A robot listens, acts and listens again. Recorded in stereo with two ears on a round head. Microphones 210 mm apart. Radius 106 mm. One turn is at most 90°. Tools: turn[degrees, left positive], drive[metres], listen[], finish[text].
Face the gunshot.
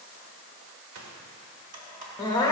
Thought: The gunshot: about 65° right or 115° right.
Action: turn[-65]
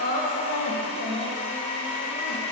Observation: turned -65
Action: listen[]
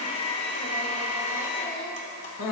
Action: finish[I heard a gunshot, but can't make it out now. It was about straight ahead or 50° right.]